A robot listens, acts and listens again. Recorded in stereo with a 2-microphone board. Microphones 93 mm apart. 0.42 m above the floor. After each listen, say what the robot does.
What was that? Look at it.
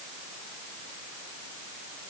Keep listening.
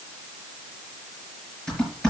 Turn 30° left.
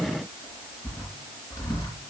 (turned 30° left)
Turn 140° left.
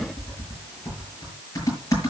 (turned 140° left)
Turn 35° left.
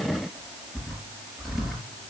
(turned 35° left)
Found it: typing on a keyboard, straight ahead, over 4 m away.